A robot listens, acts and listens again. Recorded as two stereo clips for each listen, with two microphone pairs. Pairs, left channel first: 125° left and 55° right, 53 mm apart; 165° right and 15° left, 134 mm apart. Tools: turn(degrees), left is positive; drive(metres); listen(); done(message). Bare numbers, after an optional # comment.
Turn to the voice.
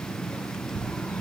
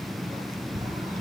listen()
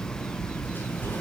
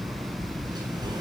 listen()
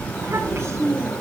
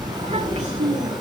# The child speaking: 15° right.
turn(-15)
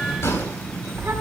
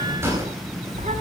listen()
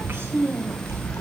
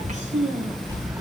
done("Facing the child speaking.")